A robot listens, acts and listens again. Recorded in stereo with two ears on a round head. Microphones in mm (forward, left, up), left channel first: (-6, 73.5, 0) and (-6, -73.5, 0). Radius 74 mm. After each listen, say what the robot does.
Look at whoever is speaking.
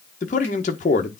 Turn 50° left.
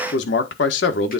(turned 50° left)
Turn 85° left.
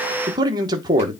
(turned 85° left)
Turn 25° right.
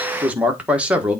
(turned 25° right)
Turn 10° right.
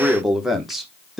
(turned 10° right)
Found it: a man speaking, straight ahead, 1 to 2 m away.